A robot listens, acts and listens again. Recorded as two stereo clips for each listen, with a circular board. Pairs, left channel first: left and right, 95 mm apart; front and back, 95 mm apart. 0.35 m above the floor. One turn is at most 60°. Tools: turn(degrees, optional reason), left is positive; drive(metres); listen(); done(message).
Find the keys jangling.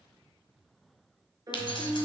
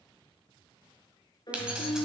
turn(degrees=60, reason="The keys jangling: 100° left.")
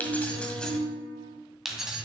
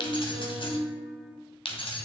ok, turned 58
turn(degrees=-10, reason="The keys jangling is now 10° right.")
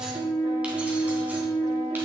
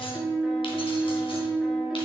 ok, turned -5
listen()
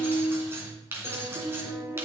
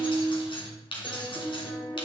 turn(degrees=-25, reason="The keys jangling is now 25° right.")
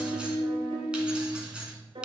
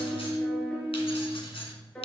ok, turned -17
turn(degrees=-10, reason="The keys jangling is now 10° right.")
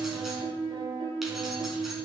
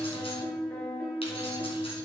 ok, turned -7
listen()
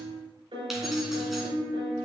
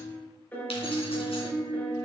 listen()
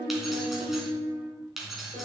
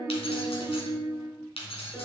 done("Facing the keys jangling, 2 to 4 m away.")